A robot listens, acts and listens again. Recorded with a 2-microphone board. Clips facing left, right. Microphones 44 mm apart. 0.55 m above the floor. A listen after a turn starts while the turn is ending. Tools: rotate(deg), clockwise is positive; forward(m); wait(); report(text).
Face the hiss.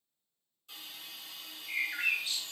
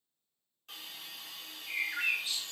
rotate(55)
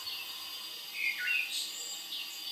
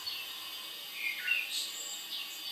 rotate(35)
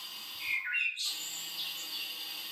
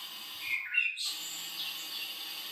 report("Facing the hiss.")